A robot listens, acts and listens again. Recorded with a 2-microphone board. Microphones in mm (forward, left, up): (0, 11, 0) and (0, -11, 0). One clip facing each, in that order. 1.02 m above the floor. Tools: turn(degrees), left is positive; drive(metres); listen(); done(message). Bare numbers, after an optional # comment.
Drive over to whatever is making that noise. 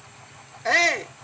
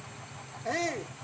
# The shout: about 65° left or 115° left.
turn(65)
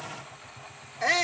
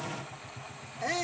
# So it is at 45° left.
turn(45)
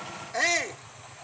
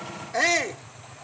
drive(1.0)
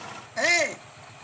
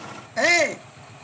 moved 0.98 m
# The shout is now 10° right.
turn(-10)
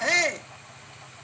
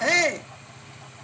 drive(1.0)
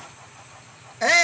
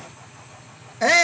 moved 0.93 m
drive(1.0)
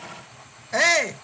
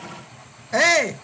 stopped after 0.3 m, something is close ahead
done("Arrived at the shout, straight ahead.")